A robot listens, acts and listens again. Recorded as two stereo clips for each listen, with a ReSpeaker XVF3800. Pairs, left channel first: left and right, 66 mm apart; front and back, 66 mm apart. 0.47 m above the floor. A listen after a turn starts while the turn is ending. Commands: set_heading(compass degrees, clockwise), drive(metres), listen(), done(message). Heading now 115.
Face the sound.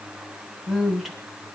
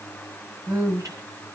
set_heading(295)
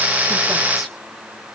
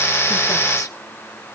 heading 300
listen()
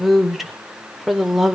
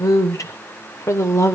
done("Facing the woman speaking.")